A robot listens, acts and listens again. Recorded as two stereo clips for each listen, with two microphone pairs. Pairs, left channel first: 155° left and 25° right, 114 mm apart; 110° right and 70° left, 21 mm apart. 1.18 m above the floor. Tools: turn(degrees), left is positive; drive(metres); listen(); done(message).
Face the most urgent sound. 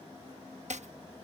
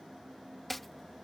listen()
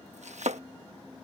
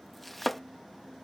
listen()
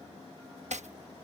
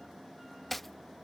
done("I can't make out anything urgent, only chopping.")